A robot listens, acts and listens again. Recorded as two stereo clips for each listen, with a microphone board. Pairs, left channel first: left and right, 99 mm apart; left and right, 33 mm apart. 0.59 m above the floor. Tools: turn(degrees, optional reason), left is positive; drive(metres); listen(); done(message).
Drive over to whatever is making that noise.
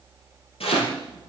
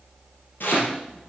turn(degrees=90)
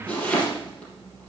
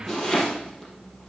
turn(degrees=15, reason="So it is at 15° left.")
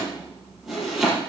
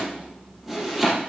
drive(metres=1.0)
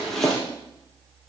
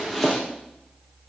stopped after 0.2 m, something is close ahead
done("Something is in my way. I am facing the chopping but have not reached it.")